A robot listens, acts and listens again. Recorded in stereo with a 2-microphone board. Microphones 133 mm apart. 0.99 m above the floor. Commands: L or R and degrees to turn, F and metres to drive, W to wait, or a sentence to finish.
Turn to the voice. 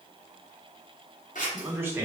R15
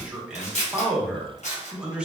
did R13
R10
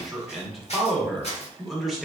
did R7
Facing the man speaking.